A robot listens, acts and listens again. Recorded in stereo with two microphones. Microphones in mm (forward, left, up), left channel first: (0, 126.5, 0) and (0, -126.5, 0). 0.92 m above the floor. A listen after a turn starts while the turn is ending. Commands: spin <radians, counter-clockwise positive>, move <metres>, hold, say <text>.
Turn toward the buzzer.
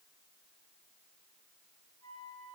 hold
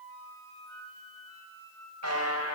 spin -1.57
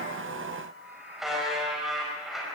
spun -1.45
say Found it: a buzzer, straight ahead.